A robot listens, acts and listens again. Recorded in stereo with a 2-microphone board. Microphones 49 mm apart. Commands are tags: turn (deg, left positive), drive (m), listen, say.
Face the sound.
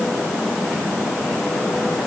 <listen/>
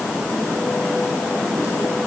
<listen/>
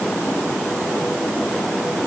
<say>I can't make out anything to turn to.</say>